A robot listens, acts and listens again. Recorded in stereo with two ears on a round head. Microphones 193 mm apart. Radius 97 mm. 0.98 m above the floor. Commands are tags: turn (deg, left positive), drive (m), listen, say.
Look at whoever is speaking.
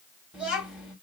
<turn deg="-30"/>
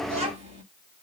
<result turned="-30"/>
<turn deg="-150"/>
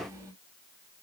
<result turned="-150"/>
<turn deg="-10"/>
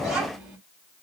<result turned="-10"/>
<say>Facing the child speaking.</say>